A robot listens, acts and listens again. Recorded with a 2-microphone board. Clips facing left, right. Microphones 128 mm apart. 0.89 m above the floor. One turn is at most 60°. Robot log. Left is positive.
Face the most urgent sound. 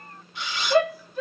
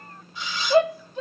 note: The shout: about 25° right or 155° right.
cmd yaw -25
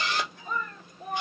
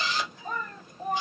note: So it is at 130° right.
cmd yaw -60
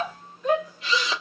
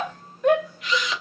note: The shout is now 90° right.
cmd yaw -60
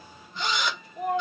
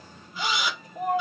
note: The shout is now 50° right.
cmd yaw -50
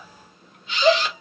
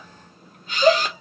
note: The shout is now 10° right.
cmd yaw -10
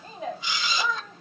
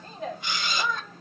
end: Found it: a shout, straight ahead.